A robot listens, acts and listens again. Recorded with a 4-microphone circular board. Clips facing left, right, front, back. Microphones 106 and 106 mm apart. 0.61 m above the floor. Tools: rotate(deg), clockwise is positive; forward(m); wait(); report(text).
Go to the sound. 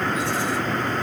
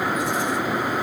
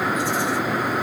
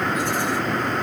wait()
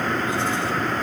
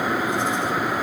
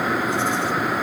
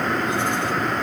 wait()
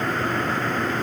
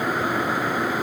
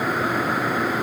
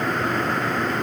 report("I can't make out anything.")